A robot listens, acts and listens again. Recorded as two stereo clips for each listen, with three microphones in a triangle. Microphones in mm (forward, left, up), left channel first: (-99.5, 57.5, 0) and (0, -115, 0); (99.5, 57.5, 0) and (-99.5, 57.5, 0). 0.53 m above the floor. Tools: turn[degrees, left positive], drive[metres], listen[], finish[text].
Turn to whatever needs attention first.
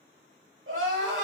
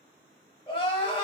Thought: The crying: 60° right.
Action: turn[-60]
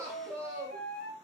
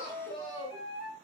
Thought: The crying is now 10° left.
Action: turn[10]
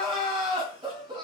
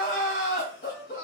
Action: finish[Facing the crying, 1 to 2 m away.]